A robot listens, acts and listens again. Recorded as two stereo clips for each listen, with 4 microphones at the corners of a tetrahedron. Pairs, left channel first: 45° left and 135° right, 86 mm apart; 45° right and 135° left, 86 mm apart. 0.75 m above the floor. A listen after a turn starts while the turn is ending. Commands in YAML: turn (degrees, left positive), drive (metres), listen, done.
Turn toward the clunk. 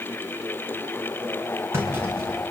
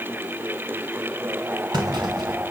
turn: 165
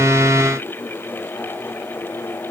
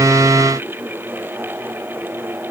done: "Facing where the clunk came from. I can't hear it now."